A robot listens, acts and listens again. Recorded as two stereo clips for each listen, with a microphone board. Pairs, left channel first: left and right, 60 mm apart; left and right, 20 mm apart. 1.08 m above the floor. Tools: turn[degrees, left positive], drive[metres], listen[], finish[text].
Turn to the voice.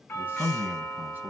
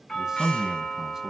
Thought: The man speaking: about 30° right or 150° right.
Action: turn[-30]
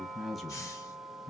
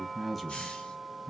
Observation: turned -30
Action: finish[Facing the man speaking, 1 to 2 m away.]